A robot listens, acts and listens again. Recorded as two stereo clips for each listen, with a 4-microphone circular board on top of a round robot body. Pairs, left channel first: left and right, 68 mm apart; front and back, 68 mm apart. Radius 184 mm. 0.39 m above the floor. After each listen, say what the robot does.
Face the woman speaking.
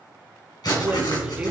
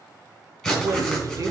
Turn 155° right.
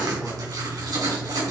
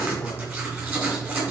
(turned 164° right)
Keep listening.
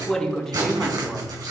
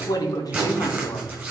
Facing the woman speaking, 1 to 2 m away.